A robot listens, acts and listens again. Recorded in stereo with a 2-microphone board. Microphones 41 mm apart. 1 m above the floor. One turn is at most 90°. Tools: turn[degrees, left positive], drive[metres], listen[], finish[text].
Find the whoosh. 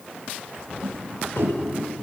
Action: turn[-90]
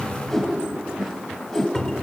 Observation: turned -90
Action: finish[Found it: a whoosh, straight ahead.]